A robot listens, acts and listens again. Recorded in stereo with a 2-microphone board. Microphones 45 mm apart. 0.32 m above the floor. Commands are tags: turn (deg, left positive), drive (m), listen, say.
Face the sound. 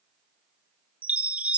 <turn deg="-30"/>
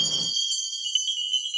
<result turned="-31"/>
<say>Found it: a chime, straight ahead.</say>